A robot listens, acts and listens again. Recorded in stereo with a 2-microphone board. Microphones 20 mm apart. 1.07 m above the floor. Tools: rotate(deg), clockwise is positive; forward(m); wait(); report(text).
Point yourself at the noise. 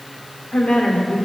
rotate(-90)
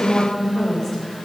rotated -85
rotate(-25)
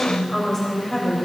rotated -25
rotate(-10)
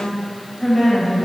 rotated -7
report("Facing the woman speaking, over 4 m away.")